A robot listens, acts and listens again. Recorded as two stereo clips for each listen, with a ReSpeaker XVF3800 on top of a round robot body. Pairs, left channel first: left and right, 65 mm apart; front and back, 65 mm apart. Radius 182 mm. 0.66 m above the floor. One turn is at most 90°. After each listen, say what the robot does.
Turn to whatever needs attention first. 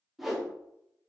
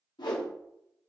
Keep listening.
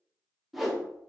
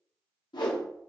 Keep listening.
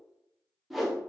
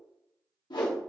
I can't make out anything urgent, only a whoosh.